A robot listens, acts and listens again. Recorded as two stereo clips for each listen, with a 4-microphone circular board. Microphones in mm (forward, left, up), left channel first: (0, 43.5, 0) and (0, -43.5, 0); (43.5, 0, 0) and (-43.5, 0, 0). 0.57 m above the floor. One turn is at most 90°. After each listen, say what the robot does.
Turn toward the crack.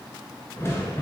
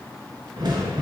Turn 90° left.
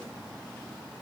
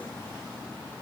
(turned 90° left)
Turn 60° left.
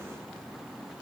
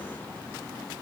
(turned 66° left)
Turn 10° right.
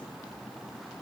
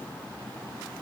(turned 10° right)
Facing where the crack came from. I can't hear it now.